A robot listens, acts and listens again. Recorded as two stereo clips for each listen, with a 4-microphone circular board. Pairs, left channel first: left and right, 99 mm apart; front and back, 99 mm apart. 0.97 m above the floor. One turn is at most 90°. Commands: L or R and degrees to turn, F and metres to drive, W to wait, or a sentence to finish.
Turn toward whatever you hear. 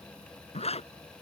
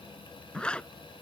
L80
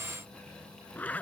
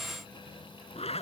L15
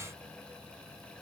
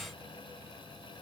W
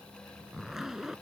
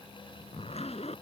Facing the zipper.